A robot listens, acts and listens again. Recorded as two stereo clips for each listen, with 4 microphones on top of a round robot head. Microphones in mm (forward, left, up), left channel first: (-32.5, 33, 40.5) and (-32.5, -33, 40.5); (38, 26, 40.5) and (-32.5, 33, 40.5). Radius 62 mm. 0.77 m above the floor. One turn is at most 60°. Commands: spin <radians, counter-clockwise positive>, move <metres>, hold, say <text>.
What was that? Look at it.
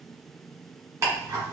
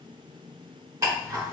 spin -1.05
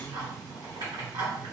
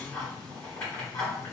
spin -1.05
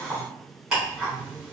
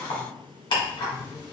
spin -0.17
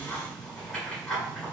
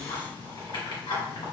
say Found it: ticking, straight ahead, 1 to 2 m away.